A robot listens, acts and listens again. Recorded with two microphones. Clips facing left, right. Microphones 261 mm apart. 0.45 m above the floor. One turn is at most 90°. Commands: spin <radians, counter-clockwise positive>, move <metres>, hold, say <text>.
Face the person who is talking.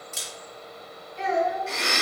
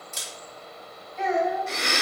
spin 0.61
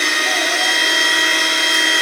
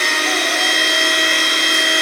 hold
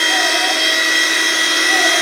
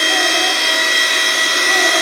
hold
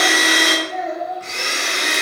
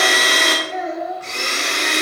say Found it: a child speaking, straight ahead, 1 to 2 m away.